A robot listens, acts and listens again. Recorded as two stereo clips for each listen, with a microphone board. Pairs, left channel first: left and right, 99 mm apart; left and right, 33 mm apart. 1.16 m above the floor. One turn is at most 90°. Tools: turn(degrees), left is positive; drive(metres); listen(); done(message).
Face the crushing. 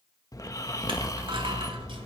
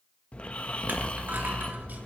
turn(degrees=-60)
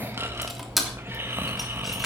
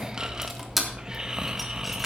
done("Found it: crushing, straight ahead.")